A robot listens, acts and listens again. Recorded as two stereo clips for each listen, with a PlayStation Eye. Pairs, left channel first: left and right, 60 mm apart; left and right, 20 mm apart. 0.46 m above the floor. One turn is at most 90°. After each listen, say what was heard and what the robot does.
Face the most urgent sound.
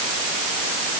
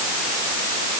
Keep listening.
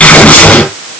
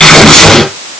Keep listening.
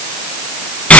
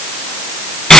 I can't make out anything urgent to turn to.